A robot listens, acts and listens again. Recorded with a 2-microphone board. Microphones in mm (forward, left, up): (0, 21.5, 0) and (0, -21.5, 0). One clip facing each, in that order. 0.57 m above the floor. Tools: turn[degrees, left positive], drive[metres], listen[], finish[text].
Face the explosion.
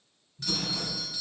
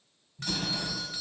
Thought: The explosion: about 30° right or 150° right.
Action: turn[-30]
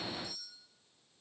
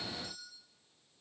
Action: listen[]
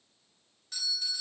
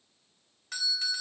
Action: finish[I heard an explosion, but can't make it out now. It was about straight ahead or 120° right.]